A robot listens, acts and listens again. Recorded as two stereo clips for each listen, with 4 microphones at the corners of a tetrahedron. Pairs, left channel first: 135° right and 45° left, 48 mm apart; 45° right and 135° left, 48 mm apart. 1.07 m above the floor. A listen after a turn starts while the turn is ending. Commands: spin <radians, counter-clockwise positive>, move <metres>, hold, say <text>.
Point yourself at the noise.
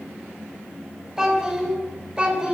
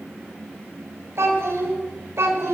spin 1.92
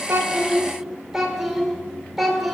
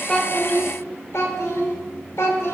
spin -0.87
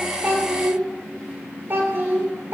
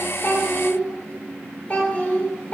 spin 0.17
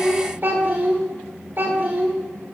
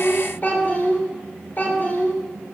say Found it: a child speaking, straight ahead.